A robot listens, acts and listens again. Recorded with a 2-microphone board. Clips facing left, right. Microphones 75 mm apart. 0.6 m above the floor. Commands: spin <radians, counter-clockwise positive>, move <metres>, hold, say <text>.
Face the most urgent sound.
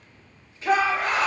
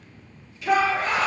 spin 0.61
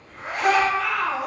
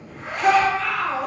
say Found it: a shout, straight ahead.